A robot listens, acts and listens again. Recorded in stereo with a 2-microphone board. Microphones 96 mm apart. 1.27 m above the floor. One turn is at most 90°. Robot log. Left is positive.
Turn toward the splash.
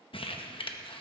cmd idle
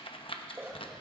note: The splash: about 20° right or 160° right.
cmd yaw -20
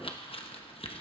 cmd idle
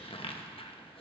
end: I heard a splash, but can't make it out now. It was about straight ahead or 140° right.